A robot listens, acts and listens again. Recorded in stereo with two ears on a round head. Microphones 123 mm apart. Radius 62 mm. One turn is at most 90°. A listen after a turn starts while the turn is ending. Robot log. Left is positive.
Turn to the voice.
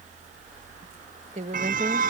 note: The woman speaking: about 50° right or 130° right.
cmd yaw -50
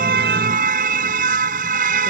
cmd idle
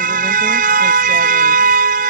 cmd idle
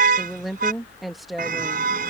end: Found it: a woman speaking, straight ahead.